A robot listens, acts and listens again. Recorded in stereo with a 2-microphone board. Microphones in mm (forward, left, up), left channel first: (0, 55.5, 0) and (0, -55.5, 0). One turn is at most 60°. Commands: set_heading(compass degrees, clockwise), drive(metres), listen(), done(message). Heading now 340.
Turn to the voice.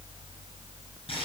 listen()
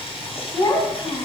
set_heading(295)
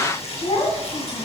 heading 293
set_heading(233)
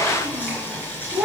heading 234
set_heading(244)
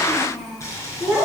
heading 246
done("Facing the child speaking, 2 to 4 m away.")